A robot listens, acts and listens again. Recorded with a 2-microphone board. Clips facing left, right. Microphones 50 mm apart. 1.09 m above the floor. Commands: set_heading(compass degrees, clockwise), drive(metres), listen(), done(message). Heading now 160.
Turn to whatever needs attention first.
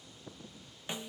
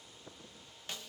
listen()
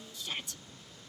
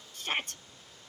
set_heading(210)
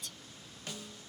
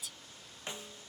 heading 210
done("Found it: a shout, straight ahead.")